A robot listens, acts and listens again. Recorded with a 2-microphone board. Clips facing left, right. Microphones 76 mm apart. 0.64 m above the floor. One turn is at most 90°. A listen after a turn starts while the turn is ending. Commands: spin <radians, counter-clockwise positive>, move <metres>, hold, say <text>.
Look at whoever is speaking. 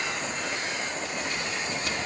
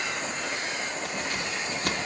hold
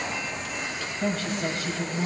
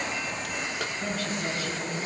spin 1.31
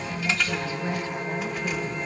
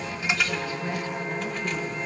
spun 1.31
spin 0.44
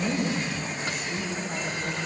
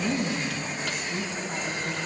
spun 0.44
say Facing the woman speaking.